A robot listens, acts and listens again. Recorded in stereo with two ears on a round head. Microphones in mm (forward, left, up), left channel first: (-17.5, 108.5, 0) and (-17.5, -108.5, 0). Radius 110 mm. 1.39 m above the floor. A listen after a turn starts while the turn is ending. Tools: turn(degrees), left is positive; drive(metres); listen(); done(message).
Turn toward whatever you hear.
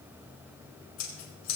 turn(degrees=70)
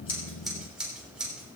done("Found it: scissors, straight ahead, over 4 m away.")